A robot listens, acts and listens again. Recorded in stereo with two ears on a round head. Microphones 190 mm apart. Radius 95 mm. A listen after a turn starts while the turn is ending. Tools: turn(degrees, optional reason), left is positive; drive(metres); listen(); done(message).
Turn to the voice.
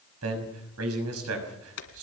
turn(degrees=-90)
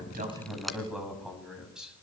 done("Facing the man speaking, over 4 m away.")